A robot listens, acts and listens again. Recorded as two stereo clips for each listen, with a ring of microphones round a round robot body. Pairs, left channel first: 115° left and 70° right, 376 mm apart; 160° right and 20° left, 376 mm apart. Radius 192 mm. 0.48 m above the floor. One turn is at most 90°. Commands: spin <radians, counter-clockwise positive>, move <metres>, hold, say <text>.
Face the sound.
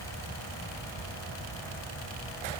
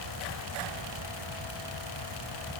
hold
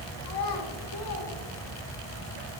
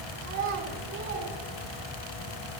spin 1.40
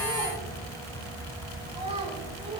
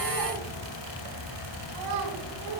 spin 0.17
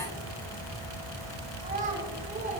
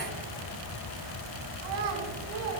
say Facing the child speaking, over 4 m away.